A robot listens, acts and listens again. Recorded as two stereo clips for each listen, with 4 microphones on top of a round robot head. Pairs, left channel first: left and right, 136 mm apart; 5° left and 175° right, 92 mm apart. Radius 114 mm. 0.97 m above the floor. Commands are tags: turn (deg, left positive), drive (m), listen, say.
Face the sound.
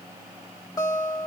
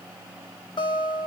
<turn deg="30"/>
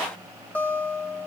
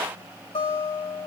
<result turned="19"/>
<turn deg="10"/>
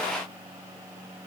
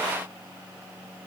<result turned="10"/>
<listen/>
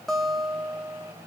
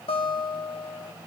<say>Facing the guitar, 2 to 4 m away.</say>